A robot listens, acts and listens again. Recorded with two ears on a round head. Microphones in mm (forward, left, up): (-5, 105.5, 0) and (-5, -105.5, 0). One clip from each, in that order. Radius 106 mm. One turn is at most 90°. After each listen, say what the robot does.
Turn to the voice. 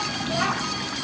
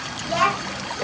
Turn 65° right.
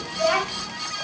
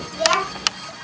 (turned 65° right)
Turn 50° right.
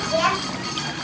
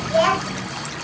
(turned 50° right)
Turn 10° left.
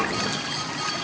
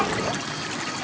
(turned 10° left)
Keep listening.
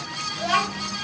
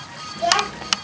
Found it: a child speaking, straight ahead, 1 to 2 m away.